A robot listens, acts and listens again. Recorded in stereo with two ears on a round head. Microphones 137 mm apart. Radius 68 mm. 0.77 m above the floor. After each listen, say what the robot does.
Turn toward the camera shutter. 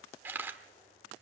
Turn 30° right.
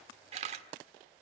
Turn 135° right.
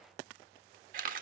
Turn 60° right.
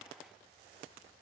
Keep listening.
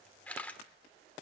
Turn 10° left.
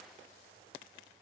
Keep listening.
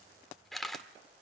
Found it: a camera shutter, straight ahead, 1 to 2 m away.